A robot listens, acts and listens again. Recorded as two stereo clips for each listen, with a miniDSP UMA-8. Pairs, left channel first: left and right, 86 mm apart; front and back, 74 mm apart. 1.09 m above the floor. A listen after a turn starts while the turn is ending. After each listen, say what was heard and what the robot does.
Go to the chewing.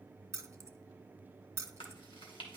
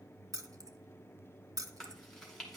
The chewing: 85° left. Turn 85° left.
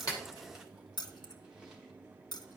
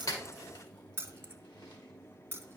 Keep listening.
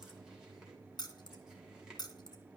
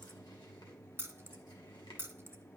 Keep listening.
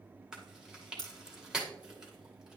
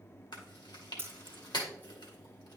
The chewing is now 10° right. Turn 10° right.
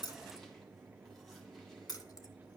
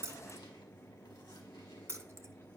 Keep listening.
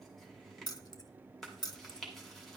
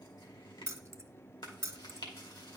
Drive 1.0 m forward.
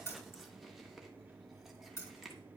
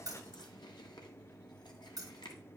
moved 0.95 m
Keep listening.
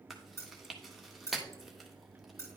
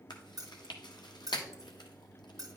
Drive 1.0 m forward.
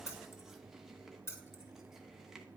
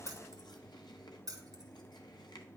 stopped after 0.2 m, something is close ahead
Keep listening.
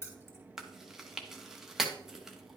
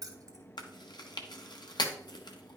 I am next to the chewing.